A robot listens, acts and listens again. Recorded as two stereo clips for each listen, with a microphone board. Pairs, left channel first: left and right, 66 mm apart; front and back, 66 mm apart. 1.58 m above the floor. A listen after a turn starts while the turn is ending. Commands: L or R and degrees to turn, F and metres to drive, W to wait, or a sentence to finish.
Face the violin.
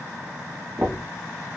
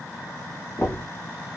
W
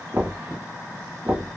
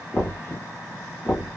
W
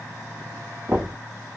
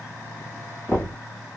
I can't make out a violin to turn to.